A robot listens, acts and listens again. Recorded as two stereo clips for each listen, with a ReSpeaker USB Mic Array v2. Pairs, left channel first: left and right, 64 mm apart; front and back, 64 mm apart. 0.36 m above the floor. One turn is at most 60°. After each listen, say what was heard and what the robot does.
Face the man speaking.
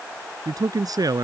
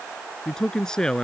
The man speaking: 80° right. Turn 60° right.
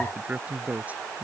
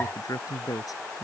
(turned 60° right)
The man speaking is now 25° right. Turn 25° right.
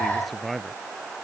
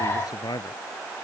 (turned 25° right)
Found it: a man speaking, straight ahead.